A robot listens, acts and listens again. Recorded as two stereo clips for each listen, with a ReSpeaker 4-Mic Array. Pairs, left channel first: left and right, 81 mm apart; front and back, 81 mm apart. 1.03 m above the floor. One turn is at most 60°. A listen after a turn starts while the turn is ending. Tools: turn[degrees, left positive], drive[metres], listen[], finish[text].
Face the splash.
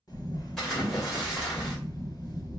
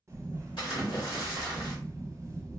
Action: finish[Facing the splash.]